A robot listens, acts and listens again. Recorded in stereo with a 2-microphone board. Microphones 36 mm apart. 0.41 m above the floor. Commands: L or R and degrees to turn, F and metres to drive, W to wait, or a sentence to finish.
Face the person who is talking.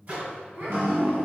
R45
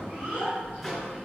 R75
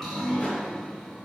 W
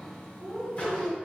R30
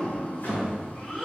L10
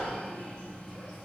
W
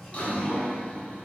W
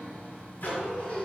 Facing the child speaking.